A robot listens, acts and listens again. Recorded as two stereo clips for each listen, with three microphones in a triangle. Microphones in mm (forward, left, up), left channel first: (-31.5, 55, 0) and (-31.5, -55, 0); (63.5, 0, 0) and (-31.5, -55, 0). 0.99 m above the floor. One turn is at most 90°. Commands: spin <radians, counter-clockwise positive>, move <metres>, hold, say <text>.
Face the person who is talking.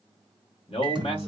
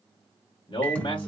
spin 1.13
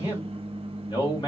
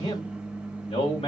spin 0.79
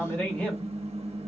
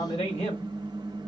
spin 0.26
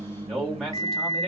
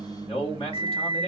say Found it: a man speaking, straight ahead, 2 to 4 m away.